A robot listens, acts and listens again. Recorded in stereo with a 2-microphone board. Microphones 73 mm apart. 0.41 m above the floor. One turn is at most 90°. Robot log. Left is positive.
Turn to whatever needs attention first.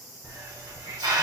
cmd idle
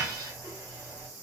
cmd idle
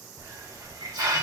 end: I can't make out anything urgent to turn to.